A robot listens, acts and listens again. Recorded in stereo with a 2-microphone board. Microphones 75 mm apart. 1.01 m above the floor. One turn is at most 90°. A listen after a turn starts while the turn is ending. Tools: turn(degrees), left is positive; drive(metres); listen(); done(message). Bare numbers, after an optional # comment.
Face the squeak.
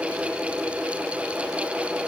listen()
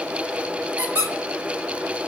# The squeak: about 40° right or 140° right.
turn(-40)
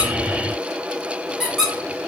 done("Found it: a squeak, straight ahead, 1 to 2 m away.")